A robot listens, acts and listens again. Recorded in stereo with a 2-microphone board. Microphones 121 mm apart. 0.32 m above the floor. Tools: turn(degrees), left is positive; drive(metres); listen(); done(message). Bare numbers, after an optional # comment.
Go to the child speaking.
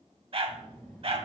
turn(30)
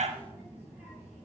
# So it is at 15° right.
turn(-15)
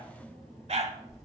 drive(1.0)
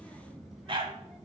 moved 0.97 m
drive(1.0)
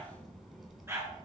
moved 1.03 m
drive(1.0)
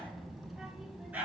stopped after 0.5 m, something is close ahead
done("Arrived at the child speaking, straight ahead.")